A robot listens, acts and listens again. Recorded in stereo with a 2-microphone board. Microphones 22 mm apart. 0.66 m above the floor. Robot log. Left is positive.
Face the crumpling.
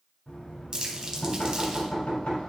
note: The crumpling: about 35° right or 145° right.
cmd yaw -35
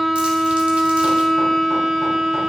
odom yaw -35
cmd idle
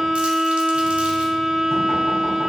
cmd idle
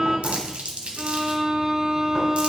note: So it is at 110° right.
cmd yaw -110
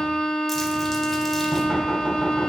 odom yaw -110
cmd idle
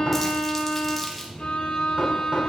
cmd idle
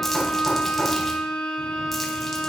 end: I heard crumpling from this way, but can't make it out now.